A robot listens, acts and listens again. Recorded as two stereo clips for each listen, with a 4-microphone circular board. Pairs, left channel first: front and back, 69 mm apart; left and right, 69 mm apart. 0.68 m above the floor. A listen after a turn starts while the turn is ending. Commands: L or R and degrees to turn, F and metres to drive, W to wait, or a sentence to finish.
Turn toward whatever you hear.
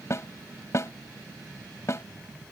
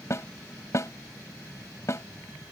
L45
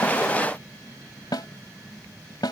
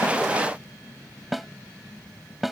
Facing the snare drum.